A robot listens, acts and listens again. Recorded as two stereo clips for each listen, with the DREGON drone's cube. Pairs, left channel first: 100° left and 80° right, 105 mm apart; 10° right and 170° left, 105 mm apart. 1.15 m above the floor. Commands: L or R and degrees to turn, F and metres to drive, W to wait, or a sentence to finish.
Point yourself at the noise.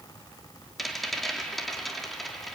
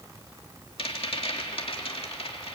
L10
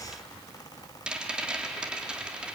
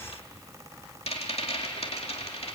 Found it: a rattle, straight ahead, 2 to 4 m away.